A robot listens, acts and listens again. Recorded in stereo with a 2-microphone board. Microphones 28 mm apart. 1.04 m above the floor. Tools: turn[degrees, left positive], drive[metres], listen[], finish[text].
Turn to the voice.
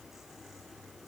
Action: listen[]
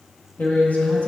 Thought: The man speaking: about 70° left or 110° left.
Action: turn[70]
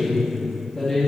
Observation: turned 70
Thought: So it is at 15° left.
Action: turn[15]
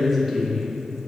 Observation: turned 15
Action: finish[Facing the man speaking.]